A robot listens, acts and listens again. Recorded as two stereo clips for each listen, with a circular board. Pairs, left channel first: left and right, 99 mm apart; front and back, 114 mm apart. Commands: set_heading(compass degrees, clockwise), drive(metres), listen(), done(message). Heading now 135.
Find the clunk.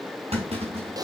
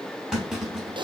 set_heading(230)
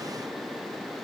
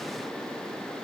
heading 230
done("Facing where the clunk came from. I can't hear it now.")